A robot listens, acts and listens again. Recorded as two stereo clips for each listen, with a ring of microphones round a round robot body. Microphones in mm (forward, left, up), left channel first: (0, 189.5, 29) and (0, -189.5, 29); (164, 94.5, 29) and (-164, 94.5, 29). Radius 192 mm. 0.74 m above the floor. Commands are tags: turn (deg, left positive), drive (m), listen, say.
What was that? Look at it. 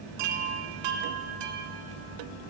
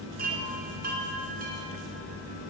<turn deg="-110"/>
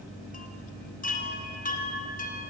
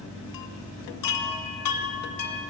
<turn deg="20"/>
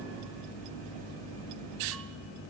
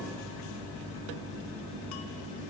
<listen/>
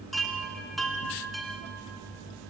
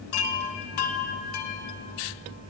<say>Facing the chime.</say>